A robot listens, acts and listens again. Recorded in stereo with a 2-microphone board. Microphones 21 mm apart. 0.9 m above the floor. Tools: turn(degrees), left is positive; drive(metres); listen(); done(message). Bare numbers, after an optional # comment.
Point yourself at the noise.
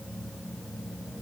listen()
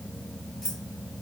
# The keys jangling: about 20° left or 160° left.
turn(20)
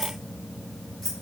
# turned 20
turn(30)
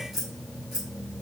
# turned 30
# So it is at 10° right.
turn(-10)
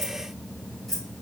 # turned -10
done("Facing the keys jangling, 2 to 4 m away.")